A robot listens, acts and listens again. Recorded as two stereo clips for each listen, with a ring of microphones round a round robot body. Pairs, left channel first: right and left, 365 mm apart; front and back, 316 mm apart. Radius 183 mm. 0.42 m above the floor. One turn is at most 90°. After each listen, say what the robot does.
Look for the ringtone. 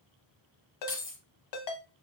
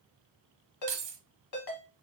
Turn 50° right.
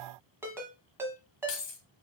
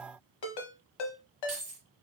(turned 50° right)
Facing the ringtone.